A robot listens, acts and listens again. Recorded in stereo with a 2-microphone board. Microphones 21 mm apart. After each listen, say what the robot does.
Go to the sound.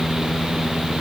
Keep listening.
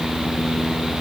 Keep listening.
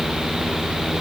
I can't make out anything.